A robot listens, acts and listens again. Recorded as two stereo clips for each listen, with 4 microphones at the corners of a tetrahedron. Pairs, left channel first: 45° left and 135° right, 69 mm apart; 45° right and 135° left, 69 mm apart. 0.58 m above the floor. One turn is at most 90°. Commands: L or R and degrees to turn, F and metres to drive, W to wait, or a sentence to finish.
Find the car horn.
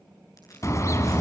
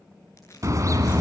L90
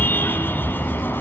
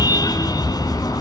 R15
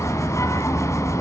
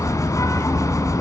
Found it: a car horn, straight ahead.